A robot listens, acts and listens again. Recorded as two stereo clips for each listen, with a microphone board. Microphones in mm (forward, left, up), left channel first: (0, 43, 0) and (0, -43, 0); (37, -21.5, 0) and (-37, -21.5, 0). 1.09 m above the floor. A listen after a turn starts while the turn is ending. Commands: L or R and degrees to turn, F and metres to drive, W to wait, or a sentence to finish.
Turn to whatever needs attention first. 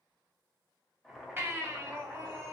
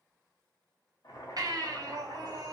R150
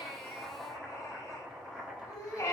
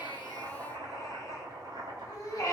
L40
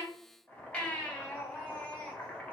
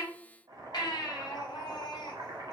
L15
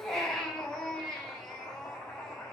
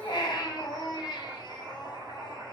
Facing the baby crying.